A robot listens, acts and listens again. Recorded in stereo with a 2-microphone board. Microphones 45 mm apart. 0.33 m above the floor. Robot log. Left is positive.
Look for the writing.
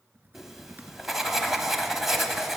cmd yaw -30
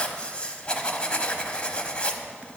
note: So it is at 25° left.
cmd yaw +25
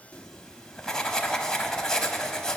note: The writing is now 15° left.
cmd yaw +15
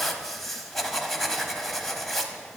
end: Found it: writing, straight ahead, 1 to 2 m away.